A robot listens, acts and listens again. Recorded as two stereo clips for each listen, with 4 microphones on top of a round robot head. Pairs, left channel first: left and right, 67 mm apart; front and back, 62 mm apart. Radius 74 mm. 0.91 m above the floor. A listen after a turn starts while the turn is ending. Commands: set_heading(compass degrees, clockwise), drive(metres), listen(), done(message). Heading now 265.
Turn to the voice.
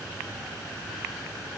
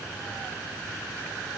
listen()
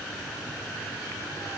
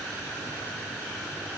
listen()
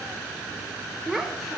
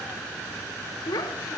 done("Found it: a child speaking, straight ahead, 2 to 4 m away.")